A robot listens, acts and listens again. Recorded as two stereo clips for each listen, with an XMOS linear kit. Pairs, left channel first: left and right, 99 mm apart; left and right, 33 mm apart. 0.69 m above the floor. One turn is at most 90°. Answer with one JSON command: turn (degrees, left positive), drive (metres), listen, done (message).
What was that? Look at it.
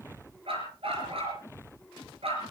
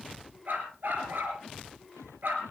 {"turn": -90}
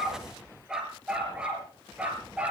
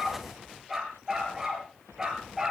{"turn": -15}
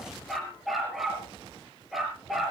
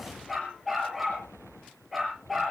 {"done": "Found it: a dog barking, straight ahead, over 4 m away."}